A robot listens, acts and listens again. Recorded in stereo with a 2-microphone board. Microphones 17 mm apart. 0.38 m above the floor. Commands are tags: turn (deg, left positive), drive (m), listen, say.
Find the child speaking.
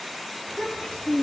<turn deg="90"/>
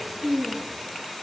<say>Facing the child speaking, over 4 m away.</say>